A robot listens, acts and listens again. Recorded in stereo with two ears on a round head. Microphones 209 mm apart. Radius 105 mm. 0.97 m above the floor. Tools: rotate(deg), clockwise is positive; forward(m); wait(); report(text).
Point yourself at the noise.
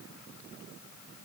wait()
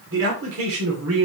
rotate(70)
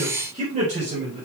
rotate(30)
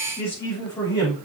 rotate(-15)
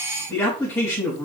report("Facing the man speaking, over 4 m away.")